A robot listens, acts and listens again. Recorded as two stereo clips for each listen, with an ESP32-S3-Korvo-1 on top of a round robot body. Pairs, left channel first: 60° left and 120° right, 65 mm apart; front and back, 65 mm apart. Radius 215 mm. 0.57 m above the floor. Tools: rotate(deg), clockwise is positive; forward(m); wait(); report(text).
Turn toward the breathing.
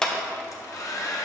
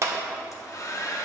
wait()
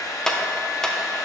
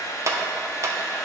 wait()
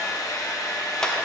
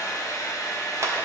report("I can't make out breathing to turn to.")